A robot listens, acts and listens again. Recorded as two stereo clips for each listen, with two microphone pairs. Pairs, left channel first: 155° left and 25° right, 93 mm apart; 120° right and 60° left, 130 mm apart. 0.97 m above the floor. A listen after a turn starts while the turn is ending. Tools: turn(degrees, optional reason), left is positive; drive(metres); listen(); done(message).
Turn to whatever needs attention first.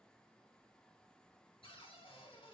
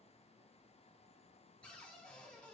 listen()
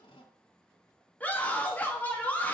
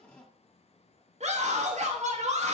turn(degrees=80, reason="The scream: 80° left.")
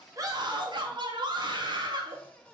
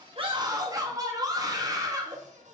done("Found it: a scream, straight ahead, 2 to 4 m away.")